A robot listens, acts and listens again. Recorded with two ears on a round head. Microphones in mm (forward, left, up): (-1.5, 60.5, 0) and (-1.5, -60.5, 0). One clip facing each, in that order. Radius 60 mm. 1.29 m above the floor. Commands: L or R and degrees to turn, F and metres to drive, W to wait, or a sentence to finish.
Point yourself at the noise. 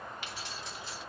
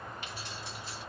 L60
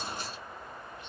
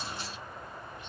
W
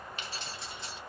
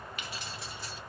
L20
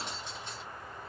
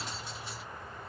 Facing the keys jangling, 2 to 4 m away.